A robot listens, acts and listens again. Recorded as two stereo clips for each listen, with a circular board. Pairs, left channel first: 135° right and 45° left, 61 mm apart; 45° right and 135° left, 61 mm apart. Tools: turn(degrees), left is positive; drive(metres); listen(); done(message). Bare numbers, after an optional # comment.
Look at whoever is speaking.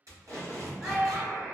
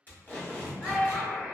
# The child speaking: 40° right.
turn(-40)
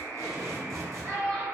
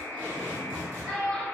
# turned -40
# The child speaking is now 15° left.
turn(15)
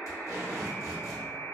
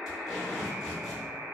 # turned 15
listen()
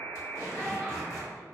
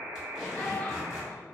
listen()
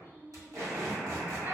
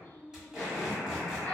done("I heard a child speaking from this way, but can't make it out now.")